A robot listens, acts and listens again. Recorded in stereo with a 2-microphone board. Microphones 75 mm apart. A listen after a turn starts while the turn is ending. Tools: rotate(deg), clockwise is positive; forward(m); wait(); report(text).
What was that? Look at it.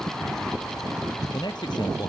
rotate(-70)
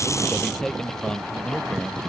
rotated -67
rotate(-10)
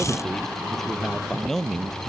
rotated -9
report("Found it: a man speaking, straight ahead.")